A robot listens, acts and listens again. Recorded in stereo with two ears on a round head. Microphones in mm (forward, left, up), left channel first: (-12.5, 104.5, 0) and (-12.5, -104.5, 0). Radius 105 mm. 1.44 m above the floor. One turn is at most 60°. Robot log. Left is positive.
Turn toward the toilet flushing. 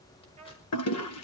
note: The toilet flushing: about 70° left or 110° left.
cmd yaw +60
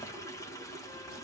note: So it is at 15° left.
cmd yaw +15
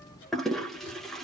end: Facing the toilet flushing, 1 to 2 m away.